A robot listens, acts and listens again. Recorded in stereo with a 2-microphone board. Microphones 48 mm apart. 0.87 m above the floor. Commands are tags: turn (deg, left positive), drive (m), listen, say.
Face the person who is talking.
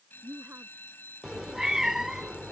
<turn deg="-45"/>
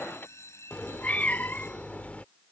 <listen/>
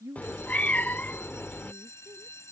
<turn deg="-90"/>
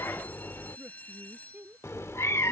<turn deg="-35"/>
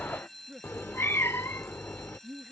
<say>Facing the woman speaking.</say>